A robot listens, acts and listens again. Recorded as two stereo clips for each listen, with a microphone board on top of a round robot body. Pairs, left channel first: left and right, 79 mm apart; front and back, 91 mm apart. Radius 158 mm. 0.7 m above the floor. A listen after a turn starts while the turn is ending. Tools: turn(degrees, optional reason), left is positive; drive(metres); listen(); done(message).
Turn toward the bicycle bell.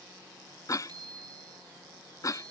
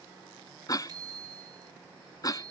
turn(degrees=-130, reason="The bicycle bell: 130° right.")
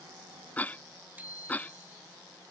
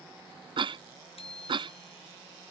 turn(degrees=-20, reason="The bicycle bell is now 20° right.")
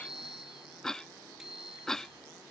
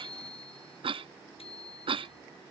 done("Facing the bicycle bell.")